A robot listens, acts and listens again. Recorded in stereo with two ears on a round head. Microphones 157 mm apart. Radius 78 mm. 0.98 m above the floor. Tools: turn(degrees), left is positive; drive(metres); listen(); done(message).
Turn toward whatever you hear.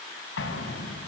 turn(degrees=90)
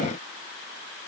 done("Facing where the explosion came from. I can't hear it now.")